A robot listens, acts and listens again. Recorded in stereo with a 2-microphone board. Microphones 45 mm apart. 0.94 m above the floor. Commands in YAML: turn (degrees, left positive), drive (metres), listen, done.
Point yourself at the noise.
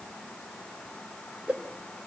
turn: -30
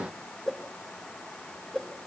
done: "Found it: a whoosh, straight ahead."